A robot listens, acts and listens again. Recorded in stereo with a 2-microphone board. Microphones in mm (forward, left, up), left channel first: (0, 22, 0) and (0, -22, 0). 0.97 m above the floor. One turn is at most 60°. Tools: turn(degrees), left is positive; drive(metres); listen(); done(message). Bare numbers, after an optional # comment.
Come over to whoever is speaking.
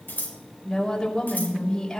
turn(30)
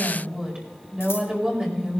# So it is at 25° right.
turn(-25)
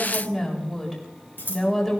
drive(1.0)
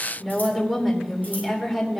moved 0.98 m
drive(1.0)
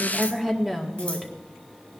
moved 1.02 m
drive(1.0)
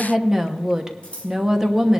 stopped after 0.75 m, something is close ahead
# The woman speaking is now 10° right.
turn(-10)
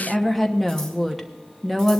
done("I am next to the woman speaking.")